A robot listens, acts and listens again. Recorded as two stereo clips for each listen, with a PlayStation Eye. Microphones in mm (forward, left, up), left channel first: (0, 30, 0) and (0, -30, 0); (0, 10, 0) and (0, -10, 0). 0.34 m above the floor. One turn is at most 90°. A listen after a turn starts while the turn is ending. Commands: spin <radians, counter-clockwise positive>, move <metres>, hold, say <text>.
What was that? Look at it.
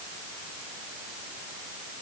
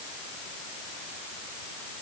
hold
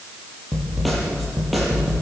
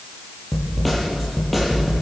spin 0.52
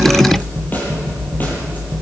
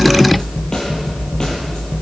spin 1.57
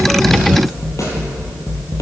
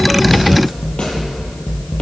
spin 1.05
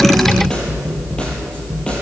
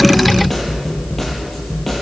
spin 0.26
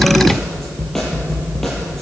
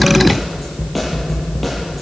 say Found it: a snare drum, straight ahead, over 4 m away.